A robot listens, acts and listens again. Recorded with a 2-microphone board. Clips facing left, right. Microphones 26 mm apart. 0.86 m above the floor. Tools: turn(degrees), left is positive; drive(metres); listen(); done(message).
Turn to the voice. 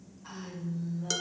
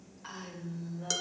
turn(degrees=-55)
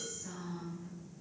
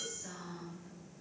turn(degrees=-60)
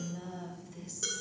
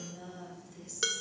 done("Found it: a woman speaking, straight ahead, over 4 m away.")